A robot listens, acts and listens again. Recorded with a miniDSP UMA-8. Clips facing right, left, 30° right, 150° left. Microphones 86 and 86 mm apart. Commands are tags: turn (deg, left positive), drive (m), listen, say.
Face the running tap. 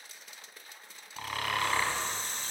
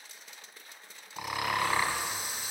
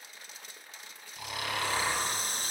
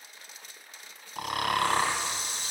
<turn deg="10"/>
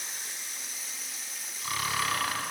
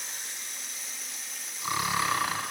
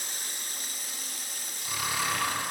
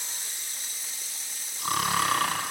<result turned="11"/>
<say>Found it: a running tap, straight ahead.</say>